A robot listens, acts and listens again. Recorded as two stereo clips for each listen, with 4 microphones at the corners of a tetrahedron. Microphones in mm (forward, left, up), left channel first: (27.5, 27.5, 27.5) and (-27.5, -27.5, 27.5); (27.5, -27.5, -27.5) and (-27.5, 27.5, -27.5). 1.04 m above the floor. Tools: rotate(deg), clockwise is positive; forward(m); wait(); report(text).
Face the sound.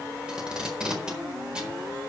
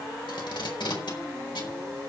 rotate(55)
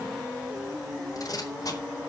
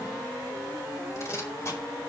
report("Found it: tape being pulled, straight ahead.")